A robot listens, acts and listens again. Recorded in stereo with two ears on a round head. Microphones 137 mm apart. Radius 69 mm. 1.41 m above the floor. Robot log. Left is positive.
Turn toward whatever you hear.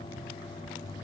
cmd idle
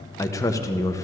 note: The man speaking: about 20° left or 160° left.
cmd yaw +20
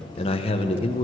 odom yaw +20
note: So it is at 140° left.
cmd yaw +140
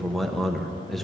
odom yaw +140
end: Facing the man speaking.